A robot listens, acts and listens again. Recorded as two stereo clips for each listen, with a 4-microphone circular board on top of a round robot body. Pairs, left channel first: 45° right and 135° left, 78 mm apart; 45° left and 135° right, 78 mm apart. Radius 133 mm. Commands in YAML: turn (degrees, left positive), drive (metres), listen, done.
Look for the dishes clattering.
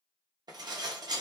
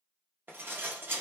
turn: 160
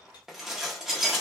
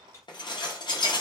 turn: 50
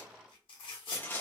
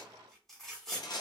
turn: 20
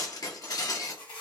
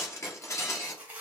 done: "Found it: dishes clattering, straight ahead, under 1 m away."